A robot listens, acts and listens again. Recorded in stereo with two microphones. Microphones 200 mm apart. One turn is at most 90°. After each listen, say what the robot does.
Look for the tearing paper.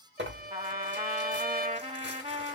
Turn 65° right.
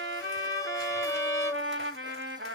Keep listening.
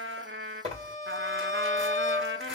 Turn 35° right.
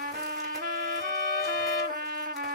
Keep listening.
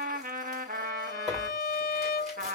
Found it: tearing paper, straight ahead.